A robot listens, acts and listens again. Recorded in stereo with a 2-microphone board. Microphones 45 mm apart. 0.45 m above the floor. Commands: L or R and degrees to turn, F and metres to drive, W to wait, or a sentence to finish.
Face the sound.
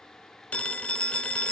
L30
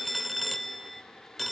Found it: a phone ringing, straight ahead.